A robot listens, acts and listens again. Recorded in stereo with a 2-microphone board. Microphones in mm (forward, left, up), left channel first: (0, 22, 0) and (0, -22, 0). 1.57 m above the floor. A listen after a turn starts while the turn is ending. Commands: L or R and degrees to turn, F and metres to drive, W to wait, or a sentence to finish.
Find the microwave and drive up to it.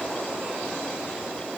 W
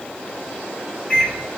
L30
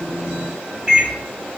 R20
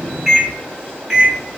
R10
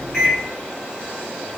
F1.0
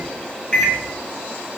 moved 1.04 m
L15
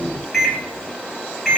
F1.0
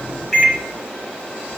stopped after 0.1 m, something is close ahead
R10
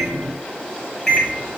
I am next to the microwave.